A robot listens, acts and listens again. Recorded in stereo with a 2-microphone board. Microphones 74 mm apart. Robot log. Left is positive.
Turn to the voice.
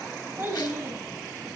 note: The child speaking: about 25° right or 155° right.
cmd yaw -25
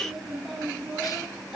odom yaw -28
end: Found it: a child speaking, straight ahead, over 4 m away.